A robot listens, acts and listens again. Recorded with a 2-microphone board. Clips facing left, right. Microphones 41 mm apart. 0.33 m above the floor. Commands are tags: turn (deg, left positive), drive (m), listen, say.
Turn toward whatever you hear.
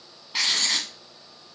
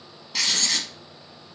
<turn deg="15"/>
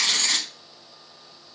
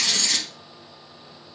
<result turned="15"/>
<turn deg="145"/>
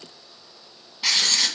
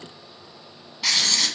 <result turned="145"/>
<say>Facing the writing, under 1 m away.</say>